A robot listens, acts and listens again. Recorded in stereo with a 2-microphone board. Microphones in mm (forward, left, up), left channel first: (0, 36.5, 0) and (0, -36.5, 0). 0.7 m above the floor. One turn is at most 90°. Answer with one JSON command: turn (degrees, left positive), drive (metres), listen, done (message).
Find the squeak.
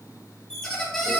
{"turn": 30}
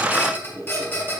{"turn": 90}
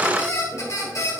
{"turn": 45}
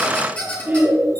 {"turn": 15}
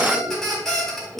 {"done": "Facing the squeak, 2 to 4 m away."}